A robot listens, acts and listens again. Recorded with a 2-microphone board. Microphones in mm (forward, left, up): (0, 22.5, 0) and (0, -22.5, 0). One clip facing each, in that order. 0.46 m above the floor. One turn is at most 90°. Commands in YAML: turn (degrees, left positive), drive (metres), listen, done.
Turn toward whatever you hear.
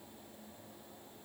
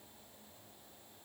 listen: true
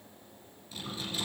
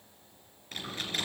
turn: -60
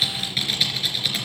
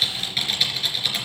done: "Facing the typing on a keyboard, 2 to 4 m away."